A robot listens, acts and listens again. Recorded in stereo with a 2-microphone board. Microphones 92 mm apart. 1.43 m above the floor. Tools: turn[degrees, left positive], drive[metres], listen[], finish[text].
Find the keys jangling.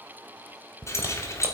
Thought: The keys jangling: about 30° left or 150° left.
Action: turn[30]
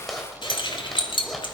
Thought: So it is at 115° left.
Action: turn[115]
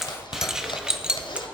Thought: The keys jangling is now 15° right.
Action: turn[-15]
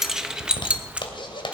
Thought: The keys jangling is now 15° right.
Action: turn[-15]
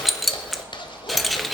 Action: finish[Found it: keys jangling, straight ahead, 1 to 2 m away.]